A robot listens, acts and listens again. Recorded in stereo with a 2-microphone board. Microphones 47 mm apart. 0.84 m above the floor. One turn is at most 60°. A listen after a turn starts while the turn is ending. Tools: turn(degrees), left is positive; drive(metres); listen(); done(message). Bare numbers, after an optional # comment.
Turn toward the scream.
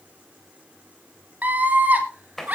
# The scream: about 35° right or 145° right.
turn(-35)
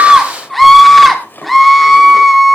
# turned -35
done("Facing the scream.")